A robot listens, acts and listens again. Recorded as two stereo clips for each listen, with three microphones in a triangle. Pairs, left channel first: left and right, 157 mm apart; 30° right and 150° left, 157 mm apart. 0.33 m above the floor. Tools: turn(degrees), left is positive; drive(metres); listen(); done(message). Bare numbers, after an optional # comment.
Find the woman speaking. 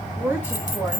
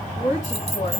# The woman speaking: 15° right.
turn(-15)
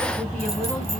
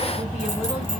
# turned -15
listen()
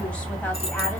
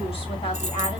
listen()
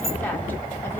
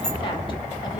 done("I heard a woman speaking from this way, but can't make it out now.")